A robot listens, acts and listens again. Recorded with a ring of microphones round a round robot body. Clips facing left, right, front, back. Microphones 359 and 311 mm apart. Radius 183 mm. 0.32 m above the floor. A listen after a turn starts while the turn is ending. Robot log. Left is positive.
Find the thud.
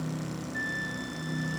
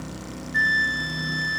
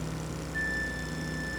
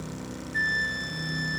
cmd idle
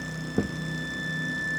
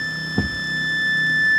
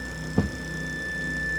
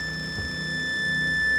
note: The thud: 15° right.
cmd yaw -15
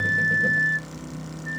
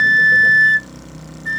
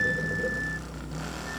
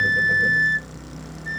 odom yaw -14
end: I heard a thud from this way, but can't make it out now.